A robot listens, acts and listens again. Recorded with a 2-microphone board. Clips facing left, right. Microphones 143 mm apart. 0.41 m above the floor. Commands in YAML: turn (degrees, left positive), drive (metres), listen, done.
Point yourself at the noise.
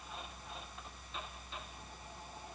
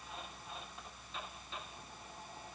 listen: true
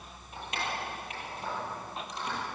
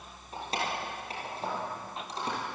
turn: -35
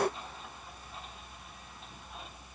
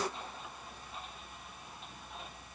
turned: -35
listen: true
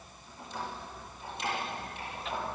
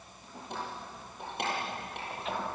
turn: -115
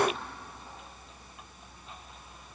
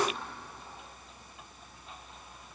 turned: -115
done: "Facing the keys jangling, over 4 m away."